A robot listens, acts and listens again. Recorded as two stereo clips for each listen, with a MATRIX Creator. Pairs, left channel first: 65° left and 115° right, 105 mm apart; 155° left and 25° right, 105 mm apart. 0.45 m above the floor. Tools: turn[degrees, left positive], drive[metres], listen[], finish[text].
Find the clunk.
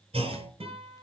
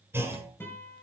Thought: The clunk: 90° right.
Action: turn[-90]
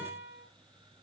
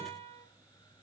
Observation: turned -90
Action: finish[Facing where the clunk came from. I can't hear it now.]